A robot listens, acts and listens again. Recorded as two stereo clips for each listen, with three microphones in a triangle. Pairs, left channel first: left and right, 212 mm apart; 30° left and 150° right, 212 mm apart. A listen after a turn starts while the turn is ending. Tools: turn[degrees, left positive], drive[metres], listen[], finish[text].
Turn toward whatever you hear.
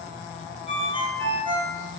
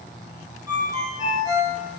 Thought: The ringtone: 75° right.
Action: turn[-75]
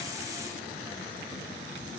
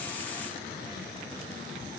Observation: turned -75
Action: listen[]
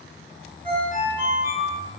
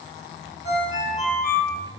Thought: The ringtone is now 25° right.
Action: turn[-25]
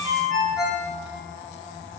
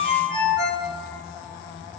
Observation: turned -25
Action: finish[Found it: a ringtone, straight ahead, 1 to 2 m away.]